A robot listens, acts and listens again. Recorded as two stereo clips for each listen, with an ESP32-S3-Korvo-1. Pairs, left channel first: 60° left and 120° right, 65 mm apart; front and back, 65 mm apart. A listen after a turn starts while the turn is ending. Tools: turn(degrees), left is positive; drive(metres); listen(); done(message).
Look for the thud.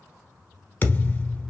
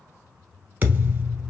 turn(degrees=125)
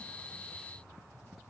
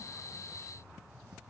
done("I heard a thud from this way, but can't make it out now.")